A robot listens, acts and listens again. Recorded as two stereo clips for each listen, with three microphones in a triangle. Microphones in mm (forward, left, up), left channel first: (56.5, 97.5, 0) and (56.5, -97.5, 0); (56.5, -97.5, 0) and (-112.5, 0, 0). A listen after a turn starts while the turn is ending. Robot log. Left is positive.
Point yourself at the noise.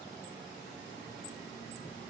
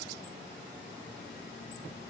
cmd idle
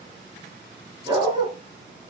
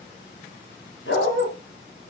note: The dog barking: 20° right.
cmd yaw -20
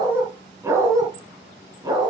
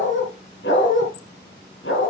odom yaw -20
note: The dog barking is now 20° right.
cmd yaw -20
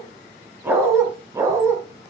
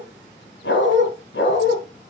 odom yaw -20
note: The dog barking is now 15° right.
cmd yaw -15
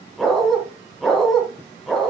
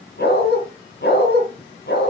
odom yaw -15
end: Facing the dog barking, 2 to 4 m away.